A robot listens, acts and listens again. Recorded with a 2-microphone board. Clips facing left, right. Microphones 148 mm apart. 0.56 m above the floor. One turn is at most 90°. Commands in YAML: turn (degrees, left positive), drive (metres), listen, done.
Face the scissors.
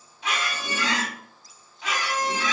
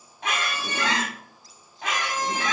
listen: true
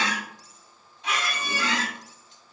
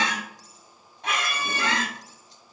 listen: true
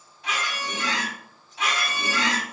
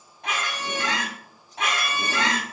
done: "I can't make out scissors, only a squeak."